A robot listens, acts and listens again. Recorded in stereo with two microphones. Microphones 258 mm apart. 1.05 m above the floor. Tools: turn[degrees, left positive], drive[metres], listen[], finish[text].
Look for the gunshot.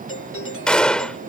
Action: turn[30]
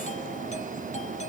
Action: listen[]
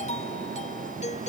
Action: finish[I heard a gunshot, but can't make it out now. It was about 25° right or 145° left.]